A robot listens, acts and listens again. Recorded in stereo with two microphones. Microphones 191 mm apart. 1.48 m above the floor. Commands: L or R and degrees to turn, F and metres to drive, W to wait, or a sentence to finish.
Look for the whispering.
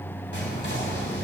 L75
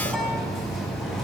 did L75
Facing the whispering, 2 to 4 m away.